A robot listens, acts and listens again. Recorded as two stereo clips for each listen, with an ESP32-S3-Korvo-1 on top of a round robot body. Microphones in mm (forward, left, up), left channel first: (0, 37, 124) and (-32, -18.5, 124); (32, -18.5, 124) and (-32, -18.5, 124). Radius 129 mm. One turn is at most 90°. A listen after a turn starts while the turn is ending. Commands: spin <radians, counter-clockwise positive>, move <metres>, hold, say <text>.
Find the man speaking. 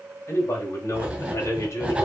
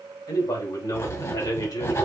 spin 0.35
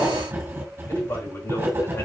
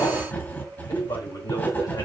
hold
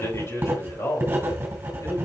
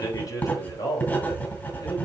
spin 0.35
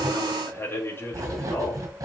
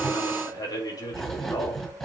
spin 0.17
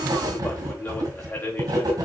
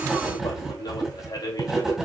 say Found it: a man speaking, straight ahead, 2 to 4 m away.